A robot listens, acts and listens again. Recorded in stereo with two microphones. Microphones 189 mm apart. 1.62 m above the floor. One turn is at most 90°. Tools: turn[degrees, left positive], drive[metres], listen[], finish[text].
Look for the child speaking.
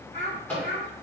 Thought: The child speaking: about 65° left or 115° left.
Action: turn[65]
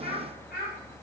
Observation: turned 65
Thought: So it is at 60° left.
Action: turn[60]
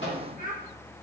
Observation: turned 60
Thought: The child speaking is now 45° left.
Action: turn[45]
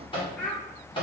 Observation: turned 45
Thought: The child speaking is now 10° left.
Action: turn[10]
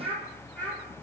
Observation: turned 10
Thought: The child speaking is now 10° left.
Action: turn[10]
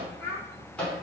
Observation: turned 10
Action: finish[Found it: a child speaking, straight ahead, 1 to 2 m away.]